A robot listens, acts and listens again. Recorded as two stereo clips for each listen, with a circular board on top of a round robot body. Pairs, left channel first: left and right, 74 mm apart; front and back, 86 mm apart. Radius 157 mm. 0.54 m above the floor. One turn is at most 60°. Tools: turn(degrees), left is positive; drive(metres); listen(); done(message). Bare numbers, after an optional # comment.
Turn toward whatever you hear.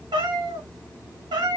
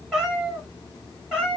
# The cat meowing: 100° right.
turn(-60)
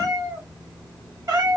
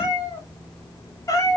# The cat meowing is now 50° right.
turn(-50)
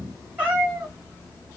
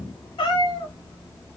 # The cat meowing is now 25° right.
turn(-25)
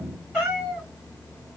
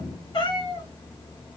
# The cat meowing is now 10° right.
turn(-10)
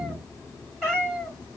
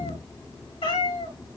done("Found it: a cat meowing, straight ahead.")